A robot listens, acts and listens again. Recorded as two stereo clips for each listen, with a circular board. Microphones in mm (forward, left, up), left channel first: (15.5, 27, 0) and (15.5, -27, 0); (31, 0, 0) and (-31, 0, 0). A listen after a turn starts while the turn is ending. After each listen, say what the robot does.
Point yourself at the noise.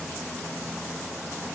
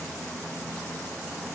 Keep listening.
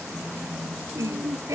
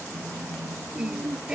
Turn 100° right.
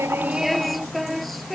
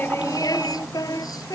Facing the singing.